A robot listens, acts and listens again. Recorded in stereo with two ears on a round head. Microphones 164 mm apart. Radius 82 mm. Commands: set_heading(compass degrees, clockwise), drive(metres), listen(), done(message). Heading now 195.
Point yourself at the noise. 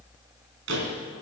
set_heading(265)
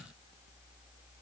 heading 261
listen()
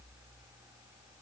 done("I heard a door slam, but can't make it out now. It was about 5° right or 40° right.")